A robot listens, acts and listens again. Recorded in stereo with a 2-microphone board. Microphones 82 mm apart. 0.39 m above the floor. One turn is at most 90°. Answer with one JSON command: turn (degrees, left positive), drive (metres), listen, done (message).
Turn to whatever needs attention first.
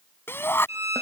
{"turn": 30}
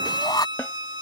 {"turn": 90}
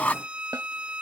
{"turn": 20}
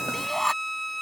{"done": "Found it: a shout, straight ahead."}